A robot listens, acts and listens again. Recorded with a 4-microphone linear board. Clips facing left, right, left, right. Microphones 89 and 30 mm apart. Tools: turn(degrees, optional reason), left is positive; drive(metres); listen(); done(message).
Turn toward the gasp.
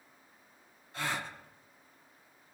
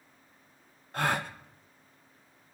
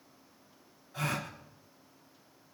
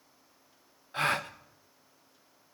turn(degrees=-55, reason="The gasp: about 55° right or 125° right.")
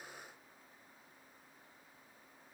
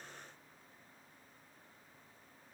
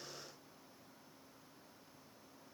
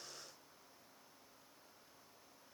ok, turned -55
listen()
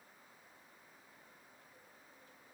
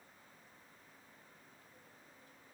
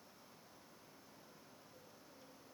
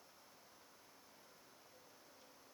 done("I heard a gasp, but can't make it out now. It was about straight ahead or 70° right.")